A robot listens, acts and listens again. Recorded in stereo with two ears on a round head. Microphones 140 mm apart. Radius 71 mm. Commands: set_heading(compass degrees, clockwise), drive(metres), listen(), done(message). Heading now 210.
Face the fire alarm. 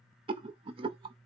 listen()
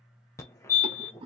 set_heading(190)
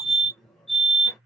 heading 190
done("Facing the fire alarm, under 1 m away.")